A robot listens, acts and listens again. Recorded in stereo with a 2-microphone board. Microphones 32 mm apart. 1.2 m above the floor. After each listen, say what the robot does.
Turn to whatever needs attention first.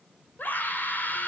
Turn 90° left.
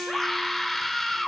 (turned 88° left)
Facing the scream, 2 to 4 m away.